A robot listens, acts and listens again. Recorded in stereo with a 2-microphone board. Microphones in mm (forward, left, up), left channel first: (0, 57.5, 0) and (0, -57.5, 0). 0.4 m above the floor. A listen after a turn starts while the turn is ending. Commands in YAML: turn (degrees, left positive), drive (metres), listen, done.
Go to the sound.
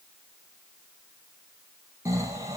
turn: -25
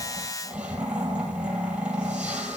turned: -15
turn: -10
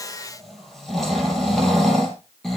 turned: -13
drive: 1.0
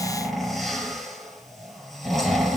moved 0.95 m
drive: 1.0
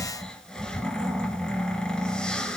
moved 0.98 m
drive: 1.0
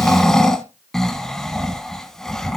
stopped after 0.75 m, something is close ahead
done: "Arrived at the snoring, straight ahead."